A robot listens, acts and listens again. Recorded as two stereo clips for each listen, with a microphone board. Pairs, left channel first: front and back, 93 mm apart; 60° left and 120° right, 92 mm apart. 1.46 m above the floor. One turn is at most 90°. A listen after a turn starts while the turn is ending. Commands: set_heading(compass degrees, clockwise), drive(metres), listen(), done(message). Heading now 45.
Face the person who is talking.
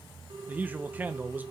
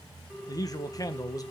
set_heading(315)
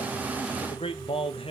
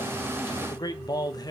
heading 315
set_heading(300)
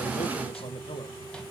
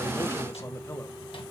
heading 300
listen()
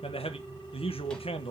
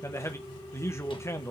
done("Facing the man speaking.")